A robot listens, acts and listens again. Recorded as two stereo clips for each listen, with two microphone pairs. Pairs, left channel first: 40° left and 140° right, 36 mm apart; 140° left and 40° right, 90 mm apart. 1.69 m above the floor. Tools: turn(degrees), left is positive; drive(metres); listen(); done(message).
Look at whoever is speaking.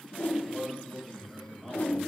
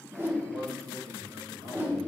turn(degrees=-45)
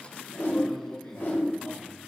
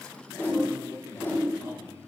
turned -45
listen()
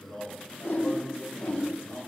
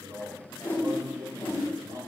done("Facing the man speaking, 2 to 4 m away.")